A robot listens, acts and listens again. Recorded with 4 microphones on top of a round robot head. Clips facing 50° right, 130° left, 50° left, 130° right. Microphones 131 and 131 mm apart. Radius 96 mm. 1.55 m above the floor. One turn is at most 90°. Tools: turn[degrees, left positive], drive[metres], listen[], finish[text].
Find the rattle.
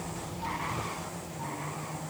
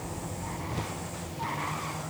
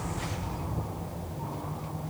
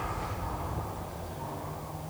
Action: listen[]
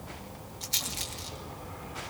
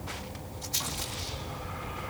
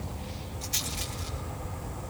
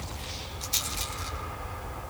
Thought: The rattle: 65° right.
Action: turn[-65]
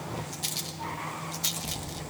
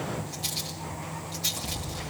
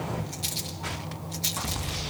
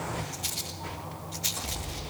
Thought: The rattle is now 10° right.
Action: turn[-10]
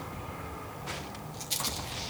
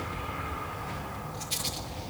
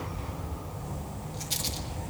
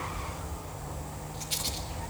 Action: finish[Found it: a rattle, straight ahead.]